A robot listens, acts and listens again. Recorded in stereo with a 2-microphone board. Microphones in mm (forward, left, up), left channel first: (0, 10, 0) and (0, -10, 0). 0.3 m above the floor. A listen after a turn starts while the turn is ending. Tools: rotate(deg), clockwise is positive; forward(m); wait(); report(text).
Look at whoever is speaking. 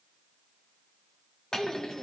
rotate(-70)
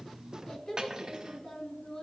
rotate(-35)
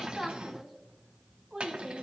rotate(20)
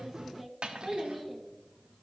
report("Facing the child speaking, 1 to 2 m away.")